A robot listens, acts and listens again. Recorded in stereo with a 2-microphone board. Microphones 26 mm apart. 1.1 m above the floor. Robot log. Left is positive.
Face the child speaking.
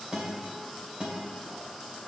cmd idle
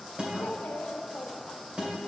cmd yaw +90
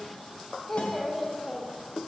note: So it is at 10° left.
cmd yaw +10
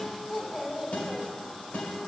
end: Found it: a child speaking, straight ahead.